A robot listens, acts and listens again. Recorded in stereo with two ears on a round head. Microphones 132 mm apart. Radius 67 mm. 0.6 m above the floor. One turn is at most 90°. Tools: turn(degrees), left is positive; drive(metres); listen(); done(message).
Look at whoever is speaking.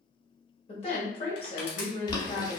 turn(degrees=40)
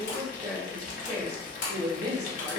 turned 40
turn(degrees=10)
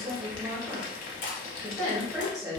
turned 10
done("Found it: a woman speaking, straight ahead.")